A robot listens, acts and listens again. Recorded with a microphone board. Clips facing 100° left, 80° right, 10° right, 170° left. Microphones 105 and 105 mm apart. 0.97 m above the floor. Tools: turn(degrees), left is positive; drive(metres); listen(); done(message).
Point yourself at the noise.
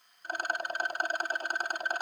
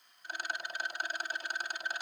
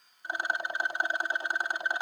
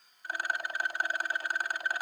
turn(degrees=55)
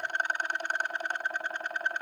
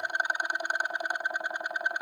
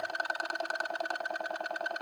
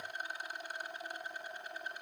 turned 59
done("Found it: a rattle, straight ahead, 1 to 2 m away.")